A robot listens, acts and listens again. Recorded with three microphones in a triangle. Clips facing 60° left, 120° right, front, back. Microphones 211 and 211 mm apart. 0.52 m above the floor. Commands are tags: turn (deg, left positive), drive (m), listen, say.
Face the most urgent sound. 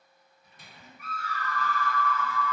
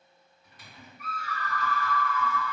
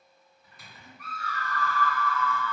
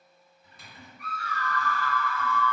<turn deg="40"/>
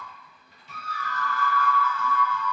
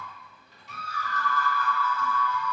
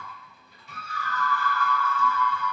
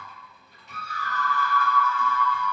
<say>Found it: a scream, straight ahead, 1 to 2 m away.</say>